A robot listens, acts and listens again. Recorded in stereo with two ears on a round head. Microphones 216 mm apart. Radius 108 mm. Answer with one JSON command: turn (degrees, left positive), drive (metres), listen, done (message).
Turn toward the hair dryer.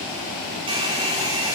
{"turn": -25}
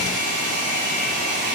{"turn": -135}
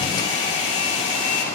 {"turn": 30}
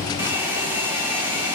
{"turn": -10}
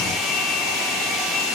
{"done": "Facing the hair dryer, 2 to 4 m away."}